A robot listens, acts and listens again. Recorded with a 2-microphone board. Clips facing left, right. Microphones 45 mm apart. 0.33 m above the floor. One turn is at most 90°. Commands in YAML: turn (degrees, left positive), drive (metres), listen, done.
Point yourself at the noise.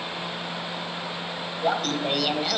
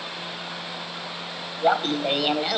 turn: -30
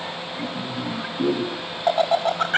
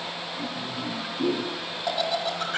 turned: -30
turn: 45
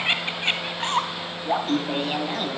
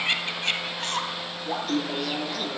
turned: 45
turn: 30
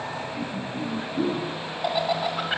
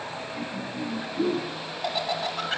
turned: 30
turn: 15
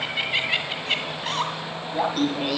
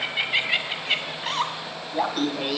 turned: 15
done: "Facing the laughter, 2 to 4 m away."